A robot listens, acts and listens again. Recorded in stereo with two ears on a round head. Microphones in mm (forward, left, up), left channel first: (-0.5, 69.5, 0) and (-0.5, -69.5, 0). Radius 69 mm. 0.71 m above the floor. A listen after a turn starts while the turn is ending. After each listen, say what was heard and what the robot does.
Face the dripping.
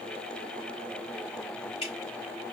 The dripping: about 40° left or 140° left. Turn 40° left.
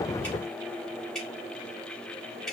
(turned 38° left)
Found it: dripping, straight ahead, 2 to 4 m away.